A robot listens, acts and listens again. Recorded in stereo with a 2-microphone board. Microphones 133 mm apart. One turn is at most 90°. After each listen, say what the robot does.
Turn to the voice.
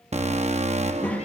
Turn 30° left.
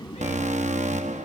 Turn 90° left.
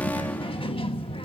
Turn 45° left.
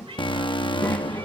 Turn 15° left.
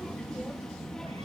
Facing the child speaking, 1 to 2 m away.